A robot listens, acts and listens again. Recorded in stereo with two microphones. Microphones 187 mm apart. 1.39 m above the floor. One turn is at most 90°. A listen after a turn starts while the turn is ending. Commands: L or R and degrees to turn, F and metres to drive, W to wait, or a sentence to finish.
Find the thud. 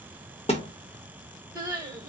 L30
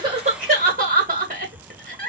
W
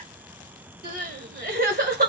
I heard a thud, but can't make it out now. It was about straight ahead or 120° left.